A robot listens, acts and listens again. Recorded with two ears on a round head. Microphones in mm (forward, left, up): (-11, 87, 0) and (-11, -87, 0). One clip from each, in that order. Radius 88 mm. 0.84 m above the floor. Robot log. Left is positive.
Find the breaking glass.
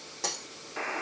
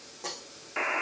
note: The breaking glass: about 65° left or 115° left.
cmd yaw +65
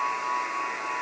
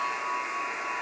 cmd idle
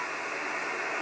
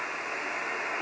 end: I heard breaking glass, but can't make it out now. It was about straight ahead or 50° left.